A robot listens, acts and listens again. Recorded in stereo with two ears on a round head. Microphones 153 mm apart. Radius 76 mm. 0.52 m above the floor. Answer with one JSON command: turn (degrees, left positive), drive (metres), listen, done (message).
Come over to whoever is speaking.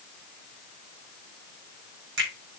{"listen": true}
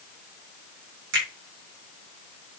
{"listen": true}
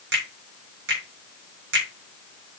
{"done": "I can't make out anyone speaking to turn to."}